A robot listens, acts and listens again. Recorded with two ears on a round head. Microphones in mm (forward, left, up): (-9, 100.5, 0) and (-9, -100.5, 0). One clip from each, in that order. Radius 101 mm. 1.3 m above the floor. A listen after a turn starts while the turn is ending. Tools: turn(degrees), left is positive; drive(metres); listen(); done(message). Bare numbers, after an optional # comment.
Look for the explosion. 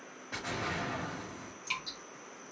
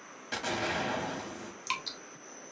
turn(-90)
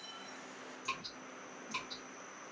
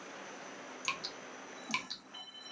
done("Facing where the explosion came from. I can't hear it now.")